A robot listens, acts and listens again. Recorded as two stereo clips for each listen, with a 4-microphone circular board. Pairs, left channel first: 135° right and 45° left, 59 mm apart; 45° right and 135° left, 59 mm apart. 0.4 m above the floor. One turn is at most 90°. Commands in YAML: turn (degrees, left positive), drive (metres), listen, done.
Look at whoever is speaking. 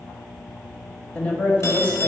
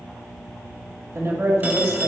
turn: 90
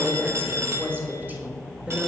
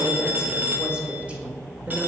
turn: 90
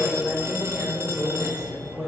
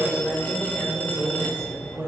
turn: 90
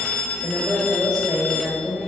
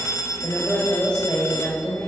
turn: 20
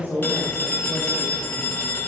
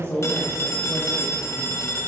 done: "Facing the woman speaking, 1 to 2 m away."